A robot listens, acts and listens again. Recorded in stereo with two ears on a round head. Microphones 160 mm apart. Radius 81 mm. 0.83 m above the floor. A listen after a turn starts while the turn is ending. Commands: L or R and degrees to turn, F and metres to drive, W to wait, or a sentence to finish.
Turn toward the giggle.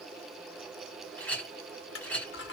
W
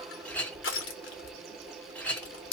W
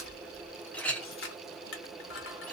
I can't make out a giggle, only a clink and crushing.